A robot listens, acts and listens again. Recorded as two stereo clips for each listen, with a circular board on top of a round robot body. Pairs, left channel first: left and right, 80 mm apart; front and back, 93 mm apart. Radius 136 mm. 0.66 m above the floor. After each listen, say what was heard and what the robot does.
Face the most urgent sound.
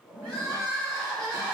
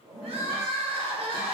The crying: 175° left. Turn 175° left.
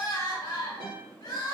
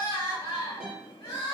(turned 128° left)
The crying is now 45° left. Turn 45° left.
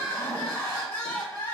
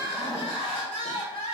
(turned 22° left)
The crying is now 25° left. Turn 25° left.
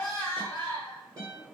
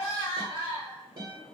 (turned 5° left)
The crying is now 20° left. Turn 20° left.
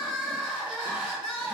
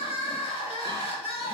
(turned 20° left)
Found it: crying, straight ahead, under 1 m away.